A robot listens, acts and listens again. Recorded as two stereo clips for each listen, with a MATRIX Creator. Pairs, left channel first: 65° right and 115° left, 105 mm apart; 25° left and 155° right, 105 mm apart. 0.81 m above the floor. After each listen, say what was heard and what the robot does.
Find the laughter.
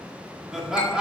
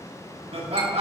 The laughter: 165° right. Turn 165° right.
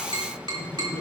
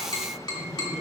Facing the laughter.